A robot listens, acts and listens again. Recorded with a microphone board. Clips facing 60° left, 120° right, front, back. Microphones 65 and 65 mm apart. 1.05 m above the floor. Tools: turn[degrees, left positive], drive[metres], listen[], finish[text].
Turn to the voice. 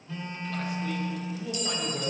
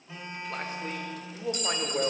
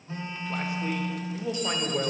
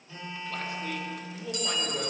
Thought: The man speaking: 70° right.
Action: turn[-70]
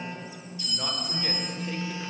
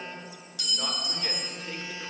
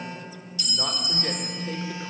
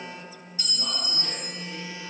Action: listen[]
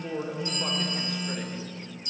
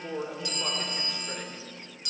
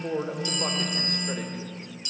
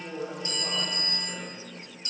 Thought: The man speaking is now 30° right.
Action: turn[-30]
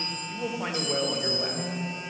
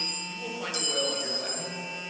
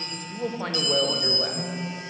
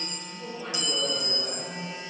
Thought: The man speaking is now 10° right.
Action: turn[-10]
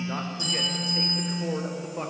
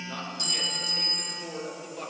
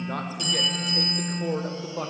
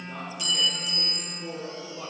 Action: finish[Facing the man speaking.]